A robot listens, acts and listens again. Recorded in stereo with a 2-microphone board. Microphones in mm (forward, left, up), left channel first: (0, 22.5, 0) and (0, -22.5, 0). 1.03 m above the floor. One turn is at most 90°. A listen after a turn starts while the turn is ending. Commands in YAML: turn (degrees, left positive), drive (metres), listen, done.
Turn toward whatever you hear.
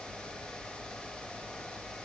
listen: true
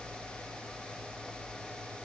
listen: true
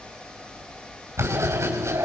turn: -90
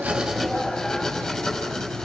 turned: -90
done: "Facing the writing."